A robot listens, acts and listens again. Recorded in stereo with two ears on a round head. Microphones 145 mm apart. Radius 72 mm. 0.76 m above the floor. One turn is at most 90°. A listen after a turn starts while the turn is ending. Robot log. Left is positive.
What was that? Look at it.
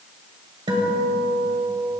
note: The guitar: about 30° right or 150° right.
cmd yaw -30
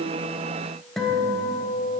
end: Found it: a guitar, straight ahead.